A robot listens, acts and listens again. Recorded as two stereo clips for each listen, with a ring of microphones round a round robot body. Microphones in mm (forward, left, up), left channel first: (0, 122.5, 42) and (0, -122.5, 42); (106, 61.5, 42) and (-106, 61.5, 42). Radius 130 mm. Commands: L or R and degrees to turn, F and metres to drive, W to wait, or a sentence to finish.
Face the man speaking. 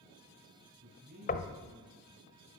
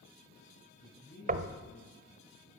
R45
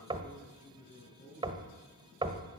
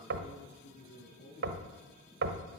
L30
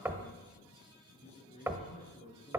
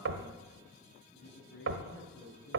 L25
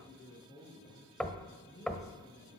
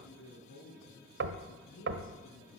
L15
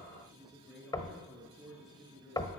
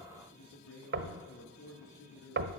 Facing the man speaking, over 4 m away.